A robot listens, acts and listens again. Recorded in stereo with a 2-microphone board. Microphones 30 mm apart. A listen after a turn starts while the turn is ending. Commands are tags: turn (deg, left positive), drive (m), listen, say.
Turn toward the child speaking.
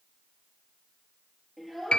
<turn deg="-30"/>
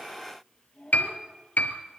<turn deg="20"/>
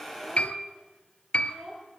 <turn deg="-15"/>
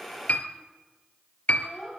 <say>Found it: a child speaking, straight ahead.</say>